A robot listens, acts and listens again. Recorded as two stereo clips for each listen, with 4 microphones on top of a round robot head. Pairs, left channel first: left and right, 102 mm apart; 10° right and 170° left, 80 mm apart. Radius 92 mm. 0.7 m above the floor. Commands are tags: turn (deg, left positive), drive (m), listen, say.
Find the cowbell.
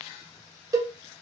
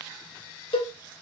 <turn deg="-30"/>
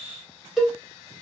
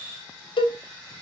<say>Facing the cowbell, 1 to 2 m away.</say>